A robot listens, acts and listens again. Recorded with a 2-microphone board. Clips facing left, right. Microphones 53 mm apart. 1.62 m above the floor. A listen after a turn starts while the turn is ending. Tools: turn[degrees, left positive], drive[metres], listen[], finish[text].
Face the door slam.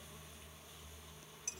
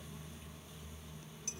Action: listen[]
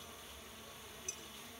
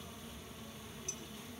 Action: listen[]
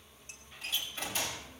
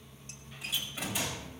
Action: turn[-30]
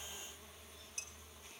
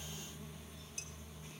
Action: listen[]
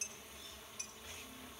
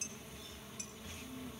Action: finish[I heard a door slam, but can't make it out now. It was about 20° left or 140° right.]